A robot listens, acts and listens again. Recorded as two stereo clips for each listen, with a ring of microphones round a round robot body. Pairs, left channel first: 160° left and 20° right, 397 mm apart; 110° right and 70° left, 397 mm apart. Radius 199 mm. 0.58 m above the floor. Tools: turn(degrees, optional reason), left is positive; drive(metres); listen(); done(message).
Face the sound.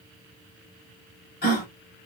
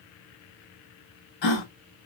turn(degrees=-135, reason="The gasp: 135° right.")
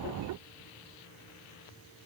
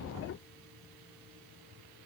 done("Facing where the gasp came from. I can't hear it now.")